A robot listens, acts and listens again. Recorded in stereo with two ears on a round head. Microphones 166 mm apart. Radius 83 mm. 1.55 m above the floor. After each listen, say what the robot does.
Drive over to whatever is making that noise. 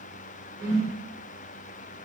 Turn 60° right.
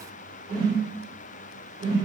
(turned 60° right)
Turn 30° right.
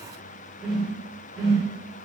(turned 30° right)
Drive 1.0 m forward.
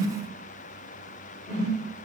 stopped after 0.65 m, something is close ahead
Arrived at the whoosh, straight ahead.